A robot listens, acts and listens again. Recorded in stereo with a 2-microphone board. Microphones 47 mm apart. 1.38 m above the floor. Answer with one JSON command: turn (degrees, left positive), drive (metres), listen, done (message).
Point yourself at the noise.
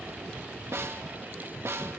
{"turn": -60}
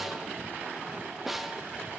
{"done": "Facing the snare drum, 1 to 2 m away."}